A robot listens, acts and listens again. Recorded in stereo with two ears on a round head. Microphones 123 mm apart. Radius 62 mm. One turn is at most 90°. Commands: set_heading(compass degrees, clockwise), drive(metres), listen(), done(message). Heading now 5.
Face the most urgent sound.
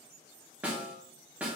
listen()
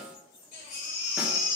set_heading(300)
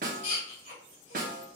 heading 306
set_heading(251)
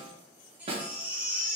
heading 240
set_heading(250)
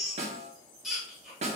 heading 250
done("Found it: a baby crying, straight ahead, 1 to 2 m away.")